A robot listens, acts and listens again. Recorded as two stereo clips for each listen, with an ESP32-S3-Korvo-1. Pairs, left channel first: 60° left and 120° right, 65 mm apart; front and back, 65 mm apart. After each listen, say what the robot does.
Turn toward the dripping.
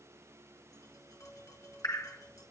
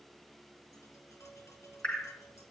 Turn 70° left.
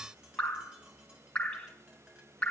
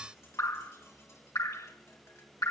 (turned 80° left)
Turn 10° right.
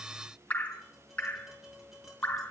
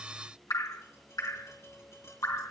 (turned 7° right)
Facing the dripping.